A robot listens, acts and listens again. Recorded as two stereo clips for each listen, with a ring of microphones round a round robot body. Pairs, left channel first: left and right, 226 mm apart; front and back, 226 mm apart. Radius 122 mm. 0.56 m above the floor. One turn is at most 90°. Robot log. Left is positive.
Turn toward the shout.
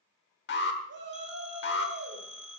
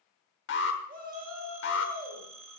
note: The shout: 130° right.
cmd yaw -90
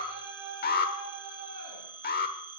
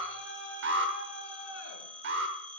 note: The shout is now 35° right.
cmd yaw -35
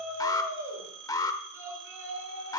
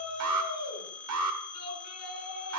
note: The shout is now 10° right.
cmd yaw -10
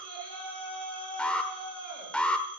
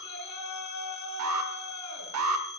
end: Facing the shout.